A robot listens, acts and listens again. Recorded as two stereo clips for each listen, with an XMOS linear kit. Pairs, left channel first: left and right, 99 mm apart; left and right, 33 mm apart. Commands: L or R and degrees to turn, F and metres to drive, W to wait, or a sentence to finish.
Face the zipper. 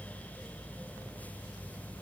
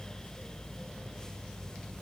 W
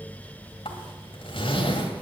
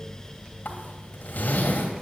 L65
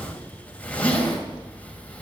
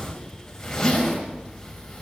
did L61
L15
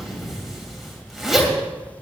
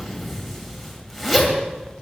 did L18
Facing the zipper, 2 to 4 m away.